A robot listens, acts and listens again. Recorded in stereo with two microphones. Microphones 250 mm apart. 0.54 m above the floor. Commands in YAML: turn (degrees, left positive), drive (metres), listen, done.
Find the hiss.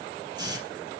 turn: -15
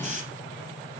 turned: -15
turn: -150
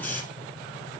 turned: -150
done: "Facing the hiss, over 4 m away."